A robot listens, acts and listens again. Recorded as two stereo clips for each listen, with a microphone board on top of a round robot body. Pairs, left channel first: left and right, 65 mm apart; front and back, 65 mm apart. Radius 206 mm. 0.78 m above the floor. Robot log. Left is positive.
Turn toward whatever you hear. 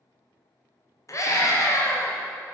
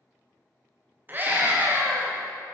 note: The scream: 125° left.
cmd yaw +125
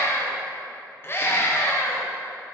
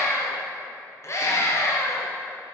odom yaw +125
note: The scream is now 40° left.
cmd yaw +40
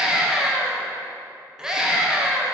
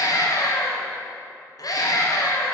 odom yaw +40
note: The scream is now 10° right.
cmd yaw -10
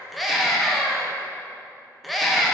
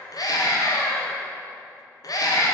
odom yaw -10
end: Found it: a scream, straight ahead.